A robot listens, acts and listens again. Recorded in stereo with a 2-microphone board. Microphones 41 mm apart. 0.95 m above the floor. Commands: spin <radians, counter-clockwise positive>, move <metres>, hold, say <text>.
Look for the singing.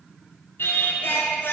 spin 1.22
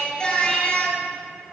spin 0.52
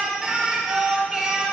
say Found it: singing, straight ahead, 2 to 4 m away.